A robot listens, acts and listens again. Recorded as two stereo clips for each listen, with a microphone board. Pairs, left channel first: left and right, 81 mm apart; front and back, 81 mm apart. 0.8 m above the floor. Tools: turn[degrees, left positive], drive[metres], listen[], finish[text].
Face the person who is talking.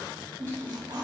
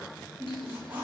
Action: listen[]
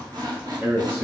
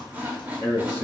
Thought: The man speaking: 145° right.
Action: turn[-145]
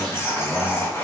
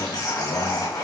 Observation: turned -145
Action: listen[]
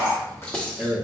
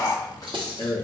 Action: finish[Found it: a man speaking, straight ahead, 1 to 2 m away.]